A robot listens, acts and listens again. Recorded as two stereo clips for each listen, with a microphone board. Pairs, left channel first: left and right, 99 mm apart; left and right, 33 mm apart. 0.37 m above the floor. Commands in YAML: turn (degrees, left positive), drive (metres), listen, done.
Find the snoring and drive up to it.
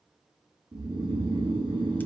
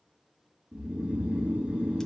turn: -60
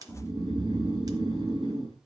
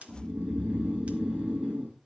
turn: -50
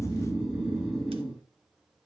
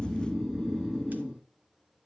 drive: 1.0
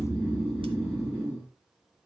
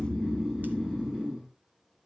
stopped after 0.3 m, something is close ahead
turn: -10
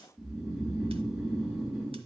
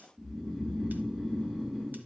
done: "Blocked. The snoring is further on, straight ahead."